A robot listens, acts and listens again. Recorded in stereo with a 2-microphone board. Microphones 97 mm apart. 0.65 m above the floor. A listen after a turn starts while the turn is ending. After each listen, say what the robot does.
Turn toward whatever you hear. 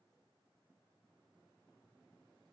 Keep listening.
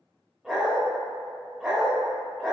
Turn 30° right.
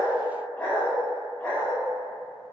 Turn 25° left.
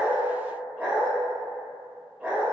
Turn 15° right.
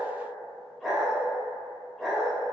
Facing the dog barking, 1 to 2 m away.